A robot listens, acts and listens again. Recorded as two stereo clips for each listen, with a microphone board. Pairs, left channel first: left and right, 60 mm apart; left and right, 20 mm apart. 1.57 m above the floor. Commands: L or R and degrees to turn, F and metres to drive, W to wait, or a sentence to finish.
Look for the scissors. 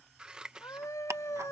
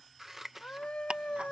R15
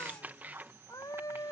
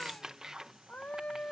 R150
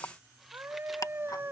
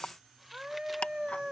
W
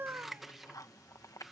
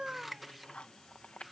Facing the scissors.